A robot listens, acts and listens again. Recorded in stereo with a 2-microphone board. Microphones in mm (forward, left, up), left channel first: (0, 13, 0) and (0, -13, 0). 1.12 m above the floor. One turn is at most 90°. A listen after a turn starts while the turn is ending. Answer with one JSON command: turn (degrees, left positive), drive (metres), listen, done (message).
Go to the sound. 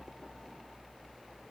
{"listen": true}
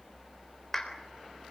{"turn": 20}
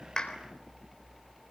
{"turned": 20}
{"listen": true}
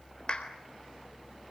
{"turn": 90}
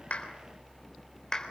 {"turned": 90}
{"turn": 25}
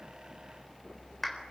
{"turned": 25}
{"drive": 1.0}
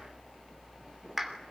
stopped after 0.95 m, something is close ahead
{"turn": -15}
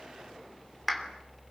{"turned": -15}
{"done": "Blocked. The clap is further on, straight ahead."}